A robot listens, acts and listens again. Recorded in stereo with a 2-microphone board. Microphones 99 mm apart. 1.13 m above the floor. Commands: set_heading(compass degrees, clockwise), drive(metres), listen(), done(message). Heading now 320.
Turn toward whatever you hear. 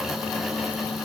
listen()
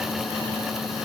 listen()
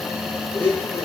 set_heading(295)
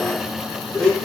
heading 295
done("Facing the blender.")